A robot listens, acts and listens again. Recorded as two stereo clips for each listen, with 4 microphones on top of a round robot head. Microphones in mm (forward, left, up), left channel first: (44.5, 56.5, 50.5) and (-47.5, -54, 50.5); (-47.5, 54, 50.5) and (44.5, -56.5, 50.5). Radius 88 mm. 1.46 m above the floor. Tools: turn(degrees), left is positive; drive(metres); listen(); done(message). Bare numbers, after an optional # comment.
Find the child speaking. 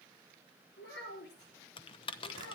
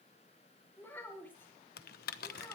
# The child speaking: 50° left.
turn(50)
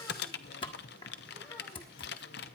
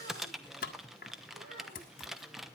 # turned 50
listen()
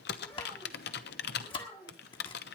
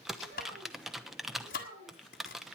# The child speaking is now 20° right.
turn(-20)
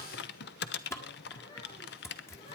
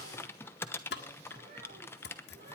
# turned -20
listen()
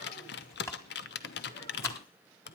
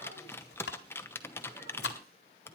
listen()
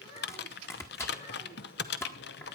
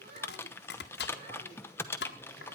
done("Facing the child speaking, over 4 m away.")